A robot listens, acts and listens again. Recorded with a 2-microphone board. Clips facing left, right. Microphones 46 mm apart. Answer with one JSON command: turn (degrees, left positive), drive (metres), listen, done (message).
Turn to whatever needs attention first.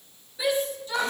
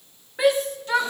{"turn": -70}
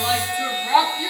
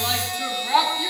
{"done": "Found it: a shout, straight ahead."}